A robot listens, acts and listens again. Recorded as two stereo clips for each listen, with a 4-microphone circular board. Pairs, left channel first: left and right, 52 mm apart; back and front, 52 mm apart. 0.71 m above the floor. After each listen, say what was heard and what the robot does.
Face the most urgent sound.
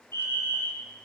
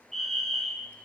The fire alarm: 90° left. Turn 90° left.
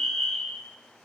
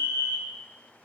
The fire alarm is now 10° left. Turn 10° left.
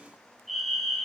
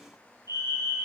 Found it: a fire alarm, straight ahead, over 4 m away.